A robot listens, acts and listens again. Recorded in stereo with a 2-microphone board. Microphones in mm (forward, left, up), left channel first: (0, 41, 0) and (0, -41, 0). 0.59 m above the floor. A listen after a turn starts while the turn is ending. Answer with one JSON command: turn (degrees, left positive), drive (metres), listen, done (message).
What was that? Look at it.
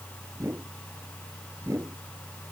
{"turn": -35}
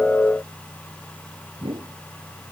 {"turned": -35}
{"turn": -110}
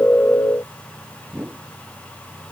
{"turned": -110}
{"turn": -25}
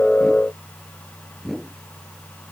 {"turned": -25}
{"done": "Found it: a whoosh, straight ahead."}